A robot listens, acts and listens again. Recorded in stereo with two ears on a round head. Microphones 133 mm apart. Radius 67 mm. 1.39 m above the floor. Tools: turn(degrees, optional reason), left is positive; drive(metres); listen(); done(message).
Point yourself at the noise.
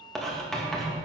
turn(degrees=30)
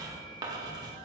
turn(degrees=-25, reason="So it is at 25° right.")
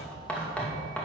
turn(degrees=10, reason="The writing is now 10° left.")
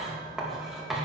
done("Found it: writing, straight ahead, 2 to 4 m away.")